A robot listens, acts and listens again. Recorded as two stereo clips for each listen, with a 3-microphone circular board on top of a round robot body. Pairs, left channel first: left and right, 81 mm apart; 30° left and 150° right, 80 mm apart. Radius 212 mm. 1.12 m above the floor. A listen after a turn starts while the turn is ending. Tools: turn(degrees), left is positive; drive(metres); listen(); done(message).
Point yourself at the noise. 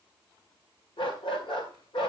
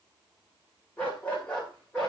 turn(degrees=110)
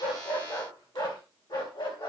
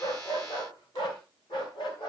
turn(degrees=60)
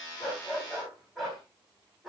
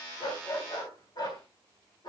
done("Found it: a dog barking, straight ahead.")